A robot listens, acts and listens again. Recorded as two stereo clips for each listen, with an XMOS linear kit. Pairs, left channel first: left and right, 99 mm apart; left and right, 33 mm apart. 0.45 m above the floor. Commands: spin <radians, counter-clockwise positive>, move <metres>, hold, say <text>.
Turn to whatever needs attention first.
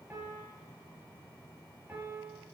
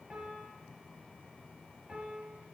hold
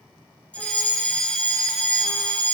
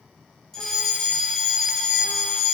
spin 0.52
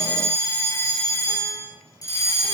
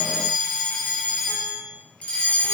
spin 2.44
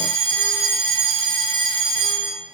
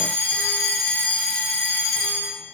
spin 1.13
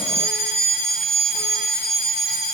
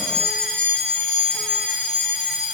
spin 0.17
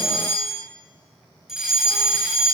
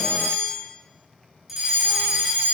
say Found it: a fire alarm, straight ahead.